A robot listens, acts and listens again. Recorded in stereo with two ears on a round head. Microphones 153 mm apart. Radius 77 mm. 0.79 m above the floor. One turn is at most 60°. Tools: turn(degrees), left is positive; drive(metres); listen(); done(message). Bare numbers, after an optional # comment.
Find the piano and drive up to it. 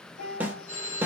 # The piano: about 65° left or 115° left.
turn(60)
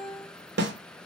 # So it is at 10° left.
turn(10)
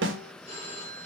listen()
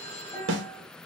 drive(1.0)
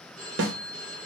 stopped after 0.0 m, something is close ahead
listen()
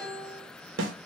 done("Blocked. The piano is further on, straight ahead.")